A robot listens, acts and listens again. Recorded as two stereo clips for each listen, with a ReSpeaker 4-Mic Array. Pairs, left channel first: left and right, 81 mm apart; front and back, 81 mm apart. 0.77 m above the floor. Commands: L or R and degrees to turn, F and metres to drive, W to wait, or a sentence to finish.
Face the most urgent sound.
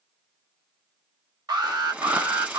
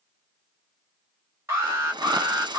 R120
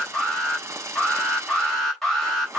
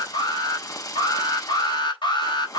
Facing the alarm, over 4 m away.